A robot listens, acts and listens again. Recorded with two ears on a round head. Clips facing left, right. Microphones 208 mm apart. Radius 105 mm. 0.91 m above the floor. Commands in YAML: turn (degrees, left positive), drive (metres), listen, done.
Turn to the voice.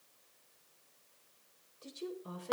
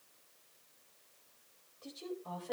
turn: 35
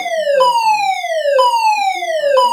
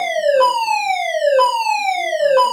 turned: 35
listen: true
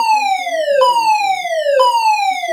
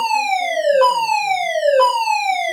listen: true
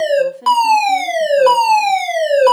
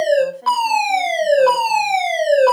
turn: 130
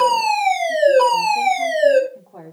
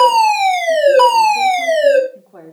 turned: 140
turn: -15
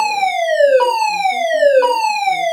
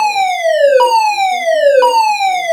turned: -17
listen: true
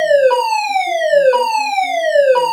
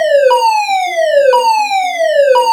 listen: true
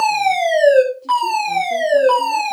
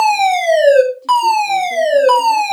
done: "Facing where the woman speaking came from. I can't hear it now."